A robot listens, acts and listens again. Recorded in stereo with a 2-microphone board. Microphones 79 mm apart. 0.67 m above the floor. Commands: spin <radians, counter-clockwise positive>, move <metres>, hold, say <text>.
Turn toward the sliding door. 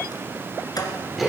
spin 0.87
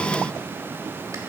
hold
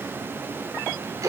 hold
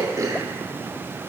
say I heard a sliding door, but can't make it out now. It was about straight ahead or 80° left.